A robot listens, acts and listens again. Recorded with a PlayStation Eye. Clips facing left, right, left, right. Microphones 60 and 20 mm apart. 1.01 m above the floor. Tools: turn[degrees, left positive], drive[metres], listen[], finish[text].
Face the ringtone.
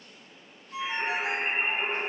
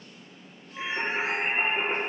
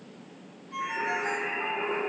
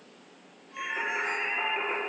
Thought: The ringtone: about 70° left or 110° left.
Action: turn[70]
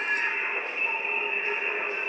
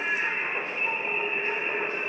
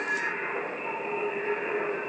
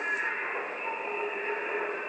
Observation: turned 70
Action: listen[]
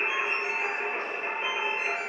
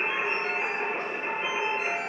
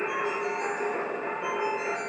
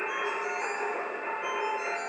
Action: listen[]
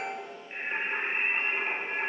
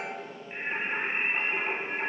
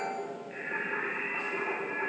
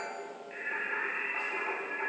Action: finish[I heard a ringtone, but can't make it out now. It was about straight ahead or 40° left.]